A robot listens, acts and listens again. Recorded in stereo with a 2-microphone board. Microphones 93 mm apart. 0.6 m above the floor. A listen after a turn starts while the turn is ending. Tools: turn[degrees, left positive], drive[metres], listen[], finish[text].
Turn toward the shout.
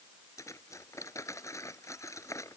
Action: listen[]
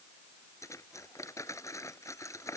Action: listen[]
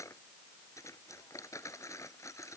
Action: finish[I can't make out a shout to turn to.]